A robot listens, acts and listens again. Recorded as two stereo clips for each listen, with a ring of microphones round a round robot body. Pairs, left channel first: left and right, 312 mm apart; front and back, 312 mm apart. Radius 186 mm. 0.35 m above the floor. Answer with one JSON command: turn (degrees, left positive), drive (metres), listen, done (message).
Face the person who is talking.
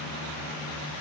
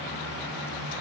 {"listen": true}
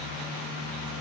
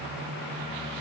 {"listen": true}
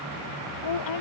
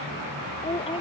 {"turn": 75}
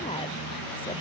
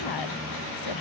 {"listen": true}
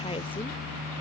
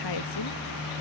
{"turn": 15}
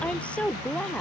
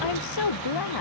{"done": "Found it: a woman speaking, straight ahead."}